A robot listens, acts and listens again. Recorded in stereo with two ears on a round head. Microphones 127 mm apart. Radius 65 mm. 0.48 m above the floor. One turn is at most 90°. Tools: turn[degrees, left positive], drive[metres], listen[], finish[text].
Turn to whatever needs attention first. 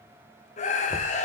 Thought: The scream: about 55° left or 125° left.
Action: turn[55]
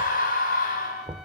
Thought: So it is at 65° left.
Action: turn[65]
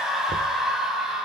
Action: finish[Facing the scream.]